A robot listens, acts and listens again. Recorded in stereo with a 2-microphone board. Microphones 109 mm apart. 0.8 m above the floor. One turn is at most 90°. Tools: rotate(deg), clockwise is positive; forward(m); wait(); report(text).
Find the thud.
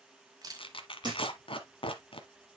rotate(45)
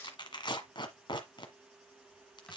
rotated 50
wait()
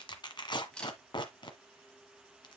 report("I heard a thud, but can't make it out now. It was about 5° left or 85° right.")